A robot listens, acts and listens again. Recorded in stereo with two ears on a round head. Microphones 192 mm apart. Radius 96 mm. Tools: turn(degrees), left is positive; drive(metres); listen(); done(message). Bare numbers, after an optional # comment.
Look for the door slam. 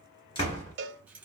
# The door slam: about 25° left or 155° left.
turn(25)
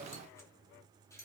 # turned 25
listen()
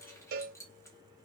done("I heard a door slam, but can't make it out now. It was about straight ahead or 130° left.")